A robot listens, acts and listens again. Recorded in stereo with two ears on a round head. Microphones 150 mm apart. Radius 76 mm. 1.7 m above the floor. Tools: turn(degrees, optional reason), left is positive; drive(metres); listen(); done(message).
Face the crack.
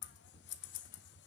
listen()
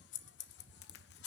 turn(degrees=60, reason="The crack: about 60° left or 120° left.")
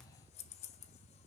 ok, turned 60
listen()
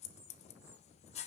done("I heard a crack, but can't make it out now. It was about straight ahead or 60° left.")